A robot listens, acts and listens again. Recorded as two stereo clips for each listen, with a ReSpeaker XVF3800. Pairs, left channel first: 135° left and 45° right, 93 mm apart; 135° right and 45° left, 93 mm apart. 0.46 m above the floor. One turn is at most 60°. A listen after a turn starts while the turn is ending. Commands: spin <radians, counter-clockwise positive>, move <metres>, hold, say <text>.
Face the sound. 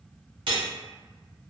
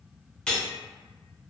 spin -0.96
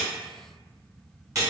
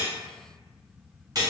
say Facing the cutlery clinking.